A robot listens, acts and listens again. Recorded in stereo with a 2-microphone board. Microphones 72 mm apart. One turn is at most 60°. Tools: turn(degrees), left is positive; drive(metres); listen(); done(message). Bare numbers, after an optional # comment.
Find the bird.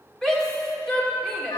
listen()
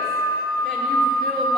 listen()
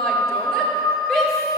done("I can't make out a bird to turn to.")